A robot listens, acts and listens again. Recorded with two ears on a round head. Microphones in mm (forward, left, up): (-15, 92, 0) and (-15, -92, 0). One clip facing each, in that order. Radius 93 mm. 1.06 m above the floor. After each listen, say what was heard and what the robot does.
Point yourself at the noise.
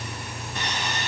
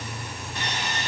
Turn 90° left.
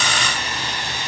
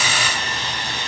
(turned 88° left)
So it is at 10° left. Turn 10° left.
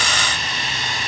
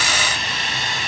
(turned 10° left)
Found it: sawing, straight ahead.